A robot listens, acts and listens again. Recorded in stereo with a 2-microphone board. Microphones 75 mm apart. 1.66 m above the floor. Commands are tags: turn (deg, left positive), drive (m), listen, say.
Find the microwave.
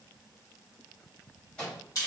<turn deg="30"/>
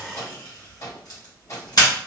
<turn deg="135"/>
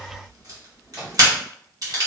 <turn deg="-15"/>
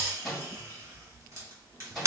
<say>Found it: a microwave, straight ahead.</say>